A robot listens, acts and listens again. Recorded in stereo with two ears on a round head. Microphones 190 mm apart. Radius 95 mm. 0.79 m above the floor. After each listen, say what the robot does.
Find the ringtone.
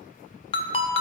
Turn 25° left.
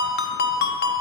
Turn 130° left.
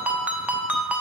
Found it: a ringtone, straight ahead.